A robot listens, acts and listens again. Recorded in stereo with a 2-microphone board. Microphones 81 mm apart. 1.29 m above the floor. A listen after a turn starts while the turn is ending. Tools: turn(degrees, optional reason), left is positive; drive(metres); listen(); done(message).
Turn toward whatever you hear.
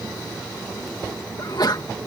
turn(degrees=55, reason="The sneeze: about 55° left or 125° left.")
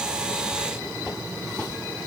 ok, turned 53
listen()
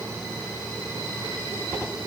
done("I heard a sneeze, but can't make it out now. It was about 5° left or 70° left.")